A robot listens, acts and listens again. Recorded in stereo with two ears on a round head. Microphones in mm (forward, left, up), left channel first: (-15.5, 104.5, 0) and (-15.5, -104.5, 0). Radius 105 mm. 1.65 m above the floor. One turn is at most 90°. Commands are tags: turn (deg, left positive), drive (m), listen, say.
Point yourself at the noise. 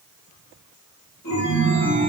<turn deg="45"/>
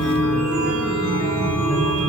<say>Found it: a chime, straight ahead.</say>